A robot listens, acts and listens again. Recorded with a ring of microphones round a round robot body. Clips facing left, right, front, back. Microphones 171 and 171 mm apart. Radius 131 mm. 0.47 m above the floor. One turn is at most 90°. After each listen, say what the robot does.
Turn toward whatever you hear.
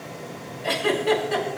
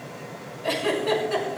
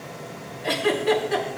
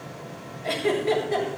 Facing the giggle, over 4 m away.